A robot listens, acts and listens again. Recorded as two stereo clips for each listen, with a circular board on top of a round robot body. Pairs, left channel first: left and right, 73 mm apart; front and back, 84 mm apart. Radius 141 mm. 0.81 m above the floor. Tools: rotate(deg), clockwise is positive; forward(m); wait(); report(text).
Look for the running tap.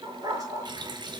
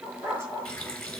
rotate(80)
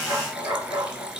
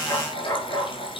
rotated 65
rotate(15)
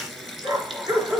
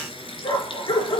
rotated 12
report("Found it: a running tap, straight ahead, 2 to 4 m away.")